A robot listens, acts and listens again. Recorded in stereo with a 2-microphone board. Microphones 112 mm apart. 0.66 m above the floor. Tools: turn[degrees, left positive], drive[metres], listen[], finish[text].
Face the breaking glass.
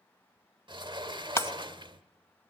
Thought: The breaking glass: about 20° left or 160° left.
Action: turn[20]
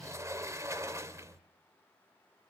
Action: listen[]
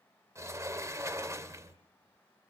Action: finish[I heard breaking glass, but can't make it out now. It was about straight ahead or 140° left.]